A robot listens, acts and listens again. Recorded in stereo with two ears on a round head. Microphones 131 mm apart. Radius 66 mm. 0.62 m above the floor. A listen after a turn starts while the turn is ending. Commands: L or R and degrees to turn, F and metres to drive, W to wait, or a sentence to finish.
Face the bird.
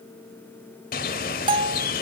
L65
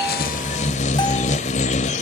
L50
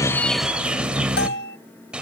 Facing the bird, 1 to 2 m away.